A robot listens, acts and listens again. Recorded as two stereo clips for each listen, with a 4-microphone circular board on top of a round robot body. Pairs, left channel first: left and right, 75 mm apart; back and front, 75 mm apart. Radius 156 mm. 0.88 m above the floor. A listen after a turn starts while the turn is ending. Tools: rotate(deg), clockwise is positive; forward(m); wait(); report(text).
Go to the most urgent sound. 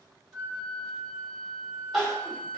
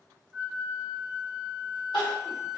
rotate(-175)
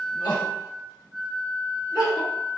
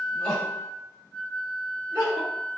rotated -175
rotate(-55)
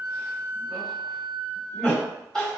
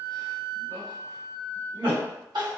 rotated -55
forward(1.0)
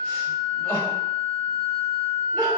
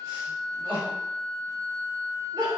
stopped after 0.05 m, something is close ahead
rotate(-10)
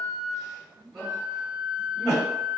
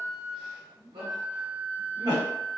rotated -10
report("Blocked. The crying is further on, straight ahead.")